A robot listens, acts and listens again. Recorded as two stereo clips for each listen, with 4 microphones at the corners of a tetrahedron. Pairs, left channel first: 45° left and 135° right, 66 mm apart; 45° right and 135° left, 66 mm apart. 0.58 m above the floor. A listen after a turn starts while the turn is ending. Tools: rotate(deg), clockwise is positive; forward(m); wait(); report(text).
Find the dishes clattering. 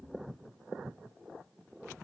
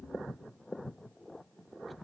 wait()
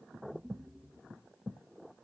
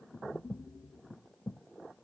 wait()
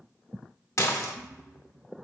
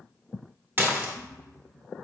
rotate(-80)
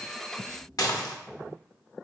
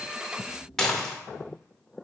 rotate(-40)
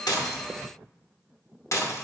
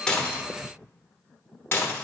rotate(-10)
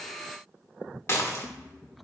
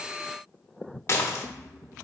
report("Found it: dishes clattering, straight ahead, under 1 m away.")